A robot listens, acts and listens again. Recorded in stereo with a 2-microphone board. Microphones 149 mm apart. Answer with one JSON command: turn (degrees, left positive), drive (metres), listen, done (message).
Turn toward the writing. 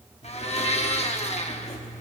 {"turn": 45}
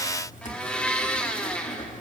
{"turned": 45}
{"turn": 75}
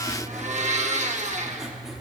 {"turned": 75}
{"done": "Facing the writing, 1 to 2 m away."}